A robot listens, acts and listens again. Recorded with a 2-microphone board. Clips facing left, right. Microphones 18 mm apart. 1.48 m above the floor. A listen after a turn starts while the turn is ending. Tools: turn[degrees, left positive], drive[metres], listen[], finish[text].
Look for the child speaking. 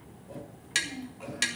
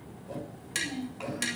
Action: turn[-90]
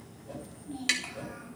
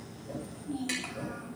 Thought: So it is at 10° right.
Action: turn[-10]
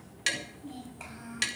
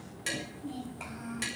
Action: finish[Found it: a child speaking, straight ahead, over 4 m away.]